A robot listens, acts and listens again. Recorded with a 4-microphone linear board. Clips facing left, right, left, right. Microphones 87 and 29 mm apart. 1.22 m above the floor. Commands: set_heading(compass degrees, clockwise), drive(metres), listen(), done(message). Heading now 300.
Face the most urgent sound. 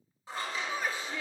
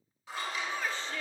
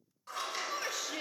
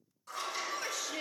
set_heading(270)
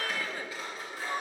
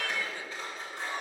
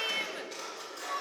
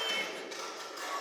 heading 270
set_heading(135)
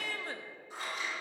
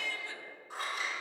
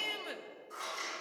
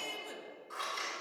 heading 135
set_heading(95)
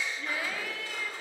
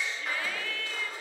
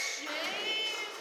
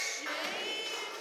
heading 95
set_heading(85)
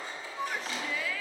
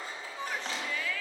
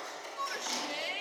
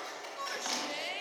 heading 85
done("Found it: a shout, straight ahead, under 1 m away.")